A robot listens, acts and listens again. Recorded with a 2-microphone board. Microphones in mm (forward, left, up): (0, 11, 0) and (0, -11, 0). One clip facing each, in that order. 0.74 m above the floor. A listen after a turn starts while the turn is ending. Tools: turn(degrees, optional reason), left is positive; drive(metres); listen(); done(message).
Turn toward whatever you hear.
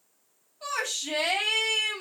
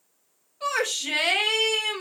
turn(degrees=-75, reason="The shout: about 75° right or 105° right.")
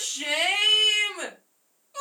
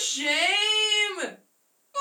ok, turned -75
turn(degrees=-25, reason="So it is at 25° right.")
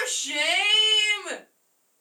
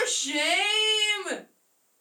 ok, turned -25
done("Found it: a shout, straight ahead.")